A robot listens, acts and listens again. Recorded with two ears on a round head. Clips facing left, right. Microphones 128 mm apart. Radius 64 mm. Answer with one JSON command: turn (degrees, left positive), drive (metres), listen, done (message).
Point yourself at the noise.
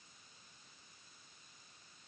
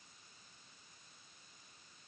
{"listen": true}
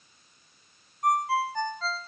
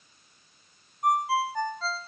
{"turn": -30}
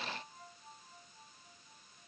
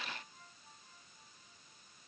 {"listen": true}
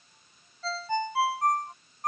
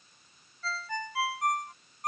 {"turn": 25}
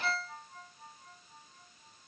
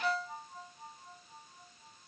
{"turn": -15}
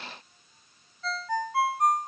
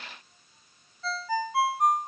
{"done": "Facing the ringtone."}